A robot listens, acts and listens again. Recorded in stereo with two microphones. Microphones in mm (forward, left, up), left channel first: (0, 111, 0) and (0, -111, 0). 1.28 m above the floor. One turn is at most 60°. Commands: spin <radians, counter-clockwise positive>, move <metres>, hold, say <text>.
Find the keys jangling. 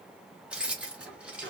spin -0.52
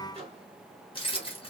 spin 0.44
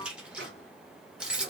say Facing the keys jangling, 1 to 2 m away.